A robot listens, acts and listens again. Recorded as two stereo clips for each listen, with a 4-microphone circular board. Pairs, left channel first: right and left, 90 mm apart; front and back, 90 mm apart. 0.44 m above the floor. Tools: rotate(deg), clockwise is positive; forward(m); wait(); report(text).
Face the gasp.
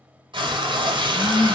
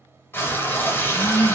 rotate(85)
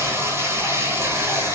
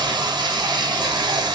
report("I heard a gasp from this way, but can't make it out now.")